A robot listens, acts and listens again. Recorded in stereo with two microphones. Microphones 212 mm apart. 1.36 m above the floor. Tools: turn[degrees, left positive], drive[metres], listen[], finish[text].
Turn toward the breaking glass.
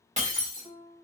Thought: The breaking glass: about 35° right or 145° right.
Action: turn[-35]
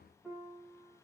Action: listen[]
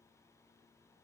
Action: finish[I heard breaking glass, but can't make it out now. It was about straight ahead or 110° right.]